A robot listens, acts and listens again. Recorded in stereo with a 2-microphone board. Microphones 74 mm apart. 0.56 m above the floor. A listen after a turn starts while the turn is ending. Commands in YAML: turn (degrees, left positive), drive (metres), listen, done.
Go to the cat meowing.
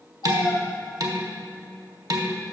turn: 90
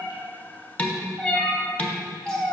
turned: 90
turn: 10
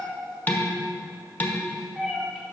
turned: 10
drive: 1.0
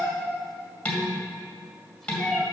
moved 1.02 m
drive: 1.0
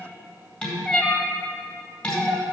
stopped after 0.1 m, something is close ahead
turn: 10
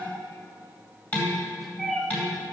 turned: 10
done: "Arrived at the cat meowing, straight ahead."